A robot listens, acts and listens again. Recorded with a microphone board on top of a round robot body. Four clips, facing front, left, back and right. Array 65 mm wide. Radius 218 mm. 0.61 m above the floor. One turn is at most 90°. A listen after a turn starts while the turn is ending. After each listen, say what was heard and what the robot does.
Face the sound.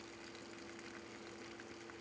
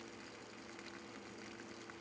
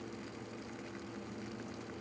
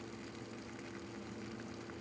Keep listening.
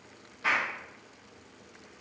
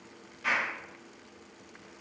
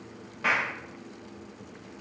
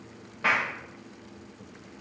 The clap: 120° right. Turn 90° right.
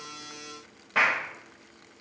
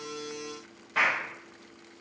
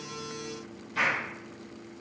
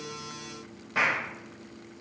The clap is now 10° right. Turn 10° right.
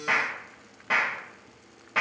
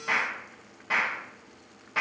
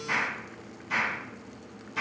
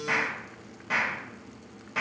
Found it: a clap, straight ahead, 2 to 4 m away.